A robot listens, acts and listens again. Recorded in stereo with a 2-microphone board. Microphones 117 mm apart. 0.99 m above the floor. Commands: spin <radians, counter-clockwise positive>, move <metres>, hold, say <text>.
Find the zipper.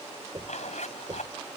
spin 1.57
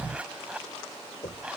spin -0.17
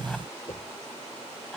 hold
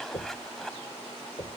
say Facing the zipper.